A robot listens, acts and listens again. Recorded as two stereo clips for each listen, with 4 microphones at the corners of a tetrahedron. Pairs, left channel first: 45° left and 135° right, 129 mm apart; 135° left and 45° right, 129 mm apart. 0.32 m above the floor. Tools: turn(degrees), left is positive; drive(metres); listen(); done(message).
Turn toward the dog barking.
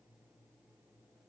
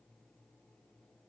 listen()
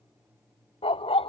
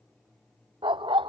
done("Facing the dog barking.")